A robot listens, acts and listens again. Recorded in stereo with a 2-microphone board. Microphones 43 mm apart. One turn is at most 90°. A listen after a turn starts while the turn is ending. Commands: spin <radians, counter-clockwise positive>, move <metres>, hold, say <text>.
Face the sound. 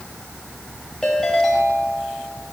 spin 0.52
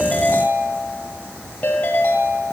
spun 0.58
spin 1.57
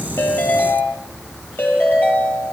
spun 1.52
spin 0.87
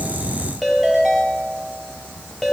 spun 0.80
say Found it: a ringtone, straight ahead, over 4 m away.